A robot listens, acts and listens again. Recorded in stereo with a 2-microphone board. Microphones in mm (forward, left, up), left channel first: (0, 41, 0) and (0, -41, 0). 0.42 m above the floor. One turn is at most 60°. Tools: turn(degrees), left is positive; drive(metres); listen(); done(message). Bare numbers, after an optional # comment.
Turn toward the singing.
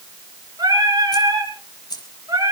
# The singing: about 50° right or 130° right.
turn(-50)
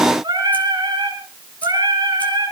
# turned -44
# So it is at 75° right.
turn(-60)
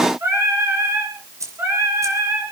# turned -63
# The singing is now 35° right.
turn(-35)
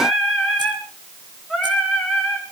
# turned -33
done("Found it: singing, straight ahead.")